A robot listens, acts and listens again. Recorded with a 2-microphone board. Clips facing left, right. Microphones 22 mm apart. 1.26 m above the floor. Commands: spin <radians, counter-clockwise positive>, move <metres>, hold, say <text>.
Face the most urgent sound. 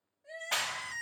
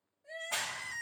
spin 0.35
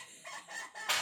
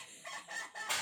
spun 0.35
say Facing the crying, 1 to 2 m away.